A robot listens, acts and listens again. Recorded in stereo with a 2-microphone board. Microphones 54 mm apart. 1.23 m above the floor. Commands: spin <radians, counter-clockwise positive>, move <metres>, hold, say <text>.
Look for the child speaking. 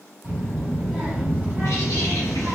spin -0.44
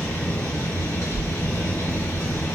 spin 0.79
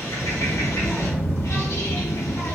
spin 0.61
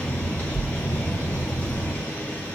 spin -0.17
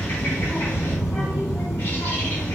say Found it: a child speaking, straight ahead, 1 to 2 m away.